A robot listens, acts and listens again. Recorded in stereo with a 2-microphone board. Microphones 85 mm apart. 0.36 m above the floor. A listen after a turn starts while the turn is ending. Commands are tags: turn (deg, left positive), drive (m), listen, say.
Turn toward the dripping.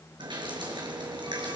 <turn deg="-70"/>
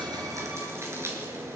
<turn deg="-35"/>
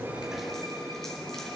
<say>Facing the dripping.</say>